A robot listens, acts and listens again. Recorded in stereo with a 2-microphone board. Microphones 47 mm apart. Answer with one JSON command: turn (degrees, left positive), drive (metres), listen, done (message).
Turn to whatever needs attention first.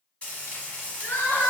{"turn": 65}
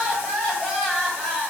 {"done": "Facing the crying."}